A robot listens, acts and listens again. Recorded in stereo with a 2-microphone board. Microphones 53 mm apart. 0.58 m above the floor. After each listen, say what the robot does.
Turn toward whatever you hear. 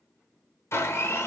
Turn 55° left.
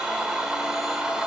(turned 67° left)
Turn 10° right.
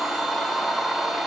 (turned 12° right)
Facing the blender.